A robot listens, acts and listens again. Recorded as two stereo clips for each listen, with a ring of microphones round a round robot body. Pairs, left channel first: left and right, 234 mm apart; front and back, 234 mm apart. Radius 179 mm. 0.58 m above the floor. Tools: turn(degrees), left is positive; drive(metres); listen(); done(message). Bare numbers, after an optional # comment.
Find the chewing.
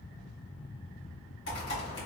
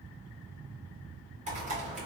listen()
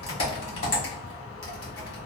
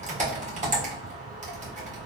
listen()
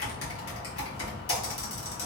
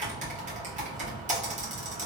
done("I can't make out chewing, only typing on a keyboard.")